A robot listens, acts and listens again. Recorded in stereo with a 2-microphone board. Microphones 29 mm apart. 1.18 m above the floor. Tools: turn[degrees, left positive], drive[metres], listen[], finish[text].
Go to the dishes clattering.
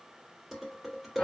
Action: turn[30]
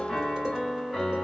Action: listen[]
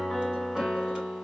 Action: listen[]
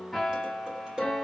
Thought: So it is at 35° right.
Action: turn[-35]
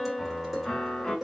Thought: The dishes clattering is now 10° right.
Action: turn[-10]
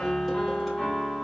Action: listen[]
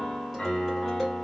Action: listen[]
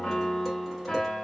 Action: finish[I heard dishes clattering from this way, but can't make it out now. I did not reach it.]